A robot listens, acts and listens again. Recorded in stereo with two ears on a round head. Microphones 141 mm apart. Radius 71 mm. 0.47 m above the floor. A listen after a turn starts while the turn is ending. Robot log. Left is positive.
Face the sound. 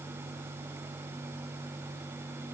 cmd idle
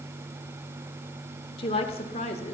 note: The woman speaking: about 45° left or 135° left.
cmd yaw +45
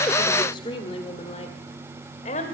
note: The woman speaking: about 50° left or 130° left.
cmd yaw +50
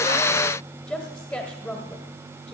note: So it is at 10° left.
cmd yaw +10
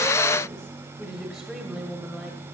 end: Found it: a woman speaking, straight ahead, 1 to 2 m away.